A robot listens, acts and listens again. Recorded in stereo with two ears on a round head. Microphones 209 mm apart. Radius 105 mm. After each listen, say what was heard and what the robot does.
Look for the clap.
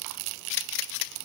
Keep listening.
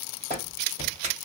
The clap: about 35° right or 145° right. Turn 35° right.
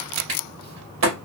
So it is at 110° right. Turn 110° right.
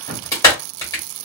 The clap is now 15° left. Turn 15° left.
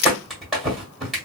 Found it: a clap, straight ahead.